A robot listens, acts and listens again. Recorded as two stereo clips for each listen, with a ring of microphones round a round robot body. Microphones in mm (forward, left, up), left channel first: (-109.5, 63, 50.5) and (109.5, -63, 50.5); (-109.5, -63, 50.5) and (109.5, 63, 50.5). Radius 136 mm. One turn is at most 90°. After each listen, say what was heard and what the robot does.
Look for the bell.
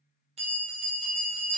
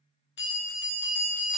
The bell: 100° right. Turn 90° right.
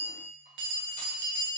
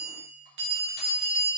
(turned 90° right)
The bell is now 20° right. Turn 20° right.
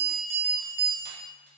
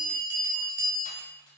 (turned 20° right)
The bell is now 10° right. Turn 10° right.
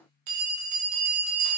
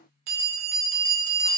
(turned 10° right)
Facing the bell.